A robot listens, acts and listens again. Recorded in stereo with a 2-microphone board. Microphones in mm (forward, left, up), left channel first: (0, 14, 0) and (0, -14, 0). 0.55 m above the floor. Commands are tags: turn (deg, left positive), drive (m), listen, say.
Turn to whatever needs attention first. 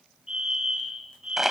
<turn deg="-25"/>
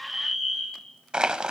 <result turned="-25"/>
<say>Facing the fire alarm.</say>